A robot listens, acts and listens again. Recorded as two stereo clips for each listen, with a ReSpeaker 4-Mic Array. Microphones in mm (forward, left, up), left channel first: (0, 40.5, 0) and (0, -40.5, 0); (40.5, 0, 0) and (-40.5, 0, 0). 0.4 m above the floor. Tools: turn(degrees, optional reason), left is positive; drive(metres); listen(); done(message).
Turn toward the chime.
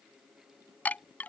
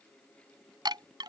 turn(degrees=160, reason="The chime: 160° left.")
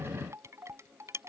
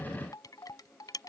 turn(degrees=-35, reason="The chime is now 35° right.")
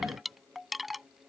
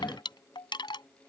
done("Found it: a chime, straight ahead.")